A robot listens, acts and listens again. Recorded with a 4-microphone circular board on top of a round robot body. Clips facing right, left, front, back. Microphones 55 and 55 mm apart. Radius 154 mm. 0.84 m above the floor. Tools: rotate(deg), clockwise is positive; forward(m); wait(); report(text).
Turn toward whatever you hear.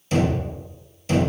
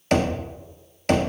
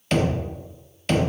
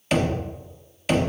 rotate(-95)
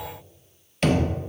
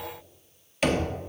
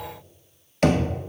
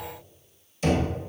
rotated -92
report("Found it: knocking, straight ahead, 1 to 2 m away.")